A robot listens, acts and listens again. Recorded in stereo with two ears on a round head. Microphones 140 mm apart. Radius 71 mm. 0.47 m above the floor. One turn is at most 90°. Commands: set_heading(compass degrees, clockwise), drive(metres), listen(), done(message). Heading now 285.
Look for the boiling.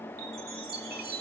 listen()
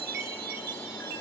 listen()
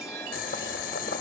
set_heading(225)
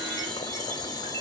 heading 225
set_heading(195)
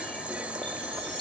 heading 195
set_heading(205)
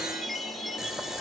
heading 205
done("Found it: boiling, straight ahead.")